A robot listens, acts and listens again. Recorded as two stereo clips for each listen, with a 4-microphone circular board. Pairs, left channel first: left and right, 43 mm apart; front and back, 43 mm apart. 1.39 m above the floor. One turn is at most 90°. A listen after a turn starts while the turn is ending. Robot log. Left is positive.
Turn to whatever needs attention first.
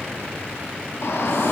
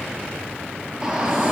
note: The shout: 105° left.
cmd yaw +90
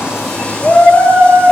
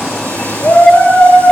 note: The shout is now 40° left.
cmd yaw +40
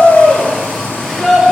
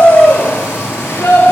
end: Found it: a shout, straight ahead.